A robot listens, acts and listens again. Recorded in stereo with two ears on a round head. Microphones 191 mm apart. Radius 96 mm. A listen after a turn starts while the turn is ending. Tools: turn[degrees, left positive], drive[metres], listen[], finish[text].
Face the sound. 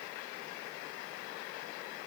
Action: listen[]
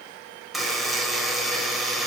Action: turn[30]
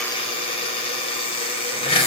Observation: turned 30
Thought: So it is at 150° left.
Action: turn[150]
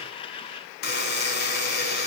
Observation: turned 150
Thought: The buzzer is now 50° left.
Action: turn[50]
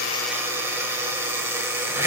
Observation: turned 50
Thought: The buzzer is now 15° right.
Action: turn[-15]
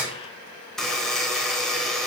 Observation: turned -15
Action: finish[Found it: a buzzer, straight ahead.]